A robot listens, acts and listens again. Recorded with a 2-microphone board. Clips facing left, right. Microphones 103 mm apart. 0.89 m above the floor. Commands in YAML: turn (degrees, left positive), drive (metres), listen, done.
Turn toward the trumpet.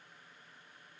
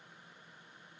listen: true
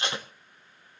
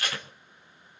listen: true
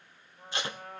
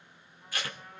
turn: 90
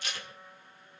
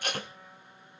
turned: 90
done: "Found it: a trumpet, straight ahead."